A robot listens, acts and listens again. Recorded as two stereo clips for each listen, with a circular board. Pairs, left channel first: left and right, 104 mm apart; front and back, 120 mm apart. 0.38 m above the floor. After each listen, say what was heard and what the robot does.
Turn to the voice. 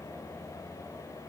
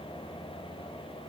Keep listening.
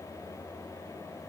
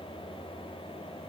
Keep listening.
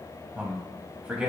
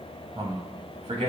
The man speaking: 170° right. Turn 170° right.
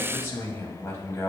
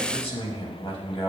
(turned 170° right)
The man speaking is now 30° left. Turn 30° left.
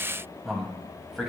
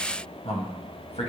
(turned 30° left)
Found it: a man speaking, straight ahead.